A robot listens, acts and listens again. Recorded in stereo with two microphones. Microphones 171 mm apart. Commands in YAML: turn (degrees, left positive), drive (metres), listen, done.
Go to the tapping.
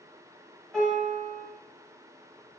listen: true
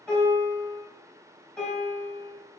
listen: true
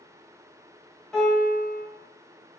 done: "I can't make out tapping to turn to."